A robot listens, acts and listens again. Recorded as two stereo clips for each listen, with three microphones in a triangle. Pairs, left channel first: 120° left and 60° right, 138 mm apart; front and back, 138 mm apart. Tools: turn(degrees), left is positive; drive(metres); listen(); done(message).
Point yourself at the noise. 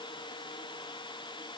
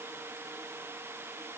listen()
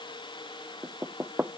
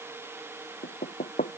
turn(degrees=20)
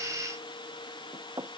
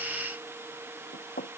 done("Found it: knocking, straight ahead.")